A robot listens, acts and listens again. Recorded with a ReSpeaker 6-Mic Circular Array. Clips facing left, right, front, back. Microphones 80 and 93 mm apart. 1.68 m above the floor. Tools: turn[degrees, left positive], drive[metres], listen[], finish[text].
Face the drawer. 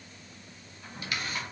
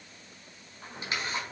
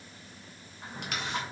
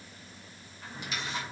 Thought: The drawer: 65° right.
Action: turn[-65]
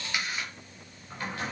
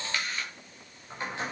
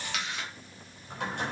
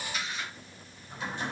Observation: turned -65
Thought: The drawer is now 20° right.
Action: turn[-20]
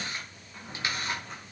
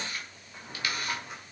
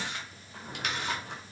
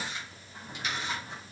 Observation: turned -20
Thought: The drawer is now 10° right.
Action: turn[-10]
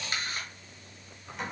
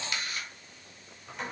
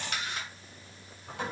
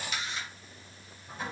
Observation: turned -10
Action: finish[Found it: a drawer, straight ahead, over 4 m away.]